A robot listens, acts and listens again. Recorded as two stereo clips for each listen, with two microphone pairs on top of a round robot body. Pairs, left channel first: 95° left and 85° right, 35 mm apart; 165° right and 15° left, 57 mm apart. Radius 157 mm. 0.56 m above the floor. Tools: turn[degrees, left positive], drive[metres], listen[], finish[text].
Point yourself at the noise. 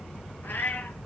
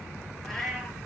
Thought: The cat meowing: 110° left.
Action: turn[110]
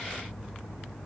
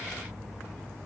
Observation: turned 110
Action: listen[]
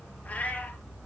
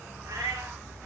Thought: The cat meowing is now 50° left.
Action: turn[50]
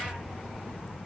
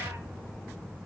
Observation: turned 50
Action: listen[]
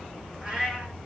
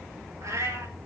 Thought: The cat meowing is now 15° right.
Action: turn[-15]
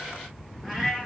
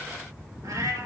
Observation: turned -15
Action: finish[Found it: a cat meowing, straight ahead.]